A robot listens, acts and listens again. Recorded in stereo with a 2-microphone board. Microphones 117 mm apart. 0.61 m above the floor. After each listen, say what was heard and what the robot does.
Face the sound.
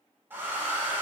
The hair dryer: about 15° right or 165° right. Turn 15° right.
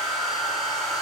Facing the hair dryer.